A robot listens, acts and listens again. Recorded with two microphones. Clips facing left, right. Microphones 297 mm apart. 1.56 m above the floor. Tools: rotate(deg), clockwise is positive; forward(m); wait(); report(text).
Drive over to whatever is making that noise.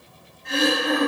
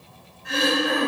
rotate(30)
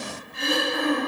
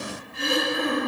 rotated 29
rotate(140)
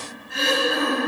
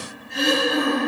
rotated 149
forward(1.0)
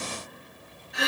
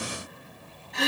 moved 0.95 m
rotate(-10)
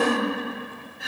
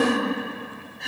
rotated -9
forward(1.0)
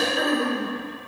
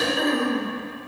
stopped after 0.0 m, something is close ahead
report("Arrived at the throat clearing, straight ahead.")